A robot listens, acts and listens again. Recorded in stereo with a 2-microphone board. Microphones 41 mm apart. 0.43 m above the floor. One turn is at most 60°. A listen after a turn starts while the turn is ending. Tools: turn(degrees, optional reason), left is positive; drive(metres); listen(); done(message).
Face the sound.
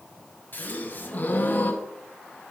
turn(degrees=45, reason="The gasp: about 45° left or 135° left.")
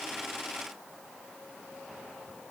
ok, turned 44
listen()
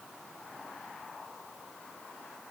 done("I heard a gasp, but can't make it out now. It was about straight ahead or 90° left.")